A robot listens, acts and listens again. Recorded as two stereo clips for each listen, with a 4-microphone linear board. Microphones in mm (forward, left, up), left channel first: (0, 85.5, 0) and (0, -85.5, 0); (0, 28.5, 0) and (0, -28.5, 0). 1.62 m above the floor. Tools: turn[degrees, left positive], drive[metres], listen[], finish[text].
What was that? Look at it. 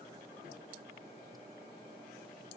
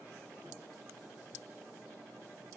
Action: listen[]
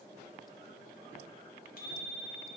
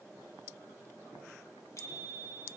Thought: The bicycle bell: about 60° left or 120° left.
Action: turn[60]
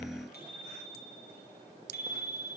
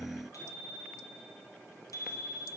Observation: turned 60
Thought: So it is at 60° left.
Action: turn[60]
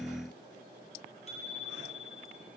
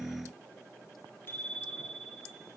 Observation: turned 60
Thought: The bicycle bell is now 40° left.
Action: turn[40]
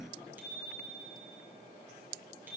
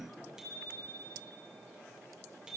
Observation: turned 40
Thought: The bicycle bell is now 10° right.
Action: turn[-10]
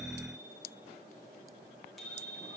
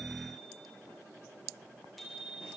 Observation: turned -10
Action: finish[Found it: a bicycle bell, straight ahead.]